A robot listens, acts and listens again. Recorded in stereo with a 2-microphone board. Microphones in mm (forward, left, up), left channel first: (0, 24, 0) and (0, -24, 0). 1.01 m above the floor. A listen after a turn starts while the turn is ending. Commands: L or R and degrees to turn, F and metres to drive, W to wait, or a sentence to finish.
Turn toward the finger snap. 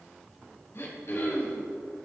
W
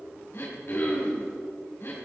W
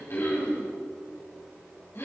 I can't make out a finger snap to turn to.